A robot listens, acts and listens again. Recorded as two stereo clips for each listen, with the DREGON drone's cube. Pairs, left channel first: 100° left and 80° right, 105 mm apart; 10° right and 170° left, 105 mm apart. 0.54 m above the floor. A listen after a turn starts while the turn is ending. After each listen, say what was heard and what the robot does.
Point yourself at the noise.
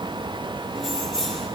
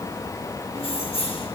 The keys jangling: 15° left. Turn 15° left.
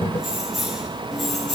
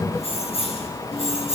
The keys jangling is now 10° left. Turn 10° left.
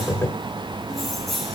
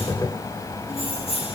The keys jangling is now 10° left. Turn 10° left.
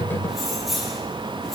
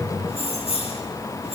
The keys jangling is now 10° left. Turn 10° left.
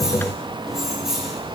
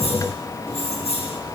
Found it: keys jangling, straight ahead, over 4 m away.